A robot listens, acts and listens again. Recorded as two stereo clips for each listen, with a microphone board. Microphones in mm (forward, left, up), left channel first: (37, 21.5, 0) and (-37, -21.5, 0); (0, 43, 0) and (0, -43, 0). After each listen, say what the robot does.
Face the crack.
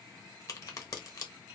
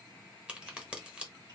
Turn 15° right.
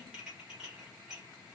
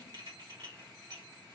Facing where the crack came from. I can't hear it now.